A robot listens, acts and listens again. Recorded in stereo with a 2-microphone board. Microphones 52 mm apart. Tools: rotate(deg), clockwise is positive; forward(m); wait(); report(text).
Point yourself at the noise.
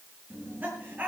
rotate(35)
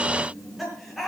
report("Found it: laughter, straight ahead, over 4 m away.")